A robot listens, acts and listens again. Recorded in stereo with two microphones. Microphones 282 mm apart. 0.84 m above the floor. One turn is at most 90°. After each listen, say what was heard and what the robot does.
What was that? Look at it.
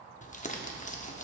The crumpling: about 25° left or 155° left. Turn 25° left.
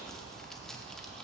Found it: crumpling, straight ahead.